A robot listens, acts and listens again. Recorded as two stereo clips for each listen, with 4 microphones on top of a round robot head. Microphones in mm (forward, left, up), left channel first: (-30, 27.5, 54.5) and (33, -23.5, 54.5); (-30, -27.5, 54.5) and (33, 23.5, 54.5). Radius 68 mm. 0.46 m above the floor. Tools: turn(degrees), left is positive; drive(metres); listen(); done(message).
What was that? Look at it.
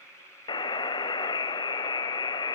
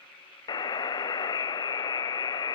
turn(degrees=175)
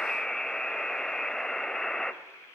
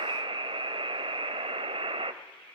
turn(degrees=55)
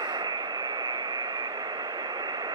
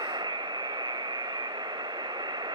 done("Facing the buzzer, under 1 m away.")